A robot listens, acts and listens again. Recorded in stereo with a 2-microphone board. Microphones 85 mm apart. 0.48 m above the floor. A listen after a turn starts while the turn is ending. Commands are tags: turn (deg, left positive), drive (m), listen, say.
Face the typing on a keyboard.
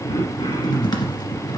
<turn deg="55"/>
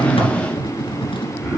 <turn deg="70"/>
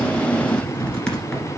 <turn deg="10"/>
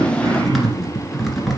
<say>Facing the typing on a keyboard.</say>